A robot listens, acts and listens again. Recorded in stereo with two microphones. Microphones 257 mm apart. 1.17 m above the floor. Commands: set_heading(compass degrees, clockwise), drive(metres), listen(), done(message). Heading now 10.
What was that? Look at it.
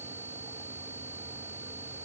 listen()
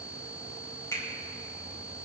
set_heading(340)
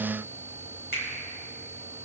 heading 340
set_heading(200)
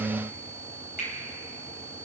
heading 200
set_heading(165)
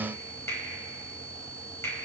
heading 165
set_heading(155)
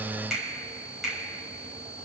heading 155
done("Found it: a finger snap, straight ahead, over 4 m away.")